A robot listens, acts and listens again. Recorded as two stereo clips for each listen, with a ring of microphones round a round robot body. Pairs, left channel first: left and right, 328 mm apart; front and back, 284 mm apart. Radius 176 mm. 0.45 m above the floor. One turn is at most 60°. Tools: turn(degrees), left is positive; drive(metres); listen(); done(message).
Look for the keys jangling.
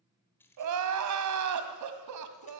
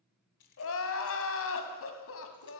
done("Facing the keys jangling, 2 to 4 m away.")